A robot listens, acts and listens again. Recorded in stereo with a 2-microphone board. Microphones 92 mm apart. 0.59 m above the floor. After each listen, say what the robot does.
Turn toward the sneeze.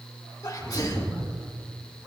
Turn 45° left.
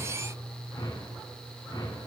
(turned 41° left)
Keep listening.
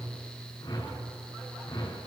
I heard a sneeze, but can't make it out now. It was about 5° left or 95° left.